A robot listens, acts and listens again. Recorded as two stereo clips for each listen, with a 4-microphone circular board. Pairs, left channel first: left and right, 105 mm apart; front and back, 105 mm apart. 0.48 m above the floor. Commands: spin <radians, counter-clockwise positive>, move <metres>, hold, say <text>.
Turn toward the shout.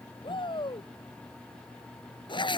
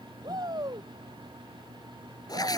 spin 2.27
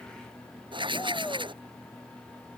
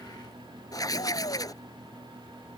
hold
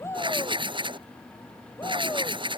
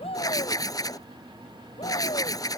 spin 0.44
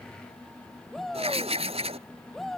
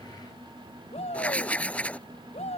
say Facing the shout.